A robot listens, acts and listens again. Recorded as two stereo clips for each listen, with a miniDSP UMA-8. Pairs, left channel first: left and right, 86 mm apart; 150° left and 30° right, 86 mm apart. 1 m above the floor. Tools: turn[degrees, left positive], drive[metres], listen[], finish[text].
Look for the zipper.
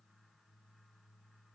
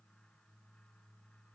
Action: listen[]
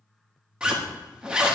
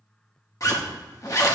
Thought: The zipper: 170° right.
Action: turn[-170]
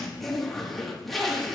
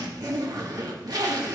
Action: finish[Facing the zipper.]